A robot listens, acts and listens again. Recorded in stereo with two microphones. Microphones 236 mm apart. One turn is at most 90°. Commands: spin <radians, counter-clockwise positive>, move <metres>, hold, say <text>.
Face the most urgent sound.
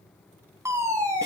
spin -0.52
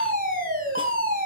spin -1.57
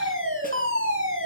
spin -1.40
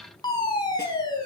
spin 0.35
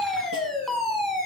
say Facing the fire alarm, over 4 m away.